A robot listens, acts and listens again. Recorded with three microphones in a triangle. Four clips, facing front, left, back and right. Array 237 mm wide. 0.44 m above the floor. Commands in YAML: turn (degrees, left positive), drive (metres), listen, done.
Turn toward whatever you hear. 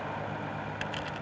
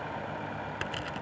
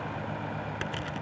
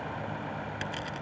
turn: 155
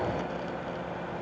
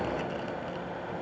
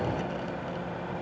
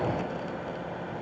listen: true
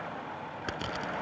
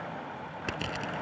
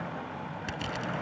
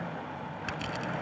turn: 45
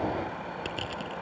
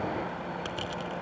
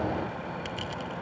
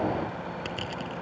done: "Found it: crushing, straight ahead."